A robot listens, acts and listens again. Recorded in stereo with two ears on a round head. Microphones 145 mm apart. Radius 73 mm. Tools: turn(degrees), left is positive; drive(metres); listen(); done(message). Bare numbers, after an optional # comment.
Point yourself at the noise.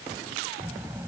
# The child speaking: about 15° right or 165° right.
turn(-15)
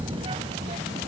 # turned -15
# The child speaking: about 40° right or 140° right.
turn(-40)
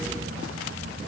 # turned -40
# So it is at 95° right.
turn(-95)
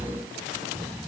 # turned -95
done("Facing the child speaking.")